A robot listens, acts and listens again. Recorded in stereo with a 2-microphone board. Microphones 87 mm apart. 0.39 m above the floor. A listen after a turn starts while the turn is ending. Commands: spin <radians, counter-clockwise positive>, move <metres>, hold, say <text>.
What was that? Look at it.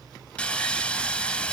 spin 0.52
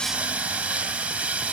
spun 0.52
spin -0.26
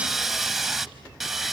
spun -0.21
say Found it: sawing, straight ahead.